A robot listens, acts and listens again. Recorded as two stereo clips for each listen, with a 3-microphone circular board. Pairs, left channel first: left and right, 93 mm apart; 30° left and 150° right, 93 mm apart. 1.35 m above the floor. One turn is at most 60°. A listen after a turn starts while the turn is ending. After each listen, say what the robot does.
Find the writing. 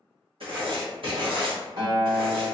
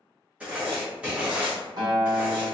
Turn 60° right.
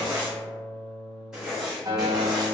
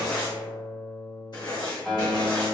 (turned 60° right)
Facing the writing.